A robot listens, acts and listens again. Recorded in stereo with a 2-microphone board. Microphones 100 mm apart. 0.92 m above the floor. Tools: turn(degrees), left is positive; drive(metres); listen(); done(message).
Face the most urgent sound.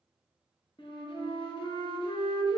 listen()
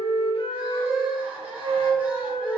turn(degrees=-30)
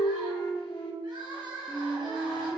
turn(degrees=-135)
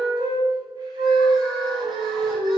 listen()
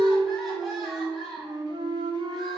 done("Facing the crying.")